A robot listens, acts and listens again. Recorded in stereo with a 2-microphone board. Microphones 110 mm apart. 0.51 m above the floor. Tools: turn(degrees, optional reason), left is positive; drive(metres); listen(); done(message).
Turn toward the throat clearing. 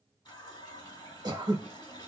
turn(degrees=-35, reason="The throat clearing: about 35° right or 145° right.")
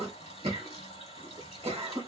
turn(degrees=-105, reason="So it is at 105° right.")
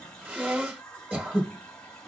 turn(degrees=-15, reason="The throat clearing is now 15° right.")
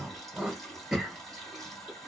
done("Facing the throat clearing.")